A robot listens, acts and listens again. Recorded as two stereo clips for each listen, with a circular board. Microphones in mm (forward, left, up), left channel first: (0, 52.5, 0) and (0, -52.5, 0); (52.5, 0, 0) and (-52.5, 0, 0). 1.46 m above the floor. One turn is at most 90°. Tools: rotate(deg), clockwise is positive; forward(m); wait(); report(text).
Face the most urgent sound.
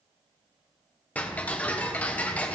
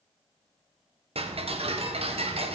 wait()
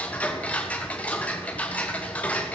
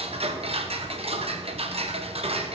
wait()
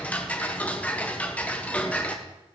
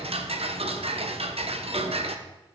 report("I can't make out anything urgent to turn to.")